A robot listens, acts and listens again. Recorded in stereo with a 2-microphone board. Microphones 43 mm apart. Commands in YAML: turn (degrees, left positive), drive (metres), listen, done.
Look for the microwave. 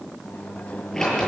turn: 45
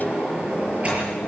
turn: 80
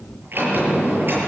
listen: true
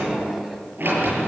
turn: -10
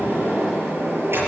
listen: true
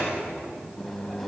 done: "Facing the microwave, 2 to 4 m away."